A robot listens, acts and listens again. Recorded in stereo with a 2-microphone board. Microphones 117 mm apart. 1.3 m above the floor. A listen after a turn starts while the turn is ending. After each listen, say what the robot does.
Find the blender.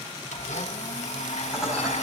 Turn 90° left.
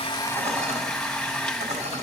Facing the blender.